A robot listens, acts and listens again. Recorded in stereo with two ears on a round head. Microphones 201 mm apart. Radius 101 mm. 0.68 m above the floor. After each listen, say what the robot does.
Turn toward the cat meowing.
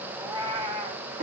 Turn 25° right.
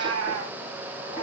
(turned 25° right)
Turn 115° right.
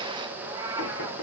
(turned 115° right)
Turn 15° right.
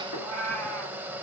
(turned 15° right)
Facing the cat meowing, 2 to 4 m away.